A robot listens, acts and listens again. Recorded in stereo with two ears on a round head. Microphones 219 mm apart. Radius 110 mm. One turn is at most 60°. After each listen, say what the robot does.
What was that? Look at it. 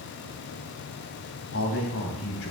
Turn 60° left.
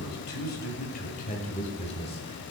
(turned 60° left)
Turn 25° left.
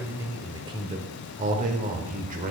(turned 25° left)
Turn 35° right.
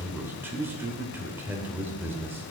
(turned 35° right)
Turn 10° right.
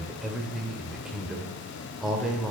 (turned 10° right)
Facing the man speaking, 1 to 2 m away.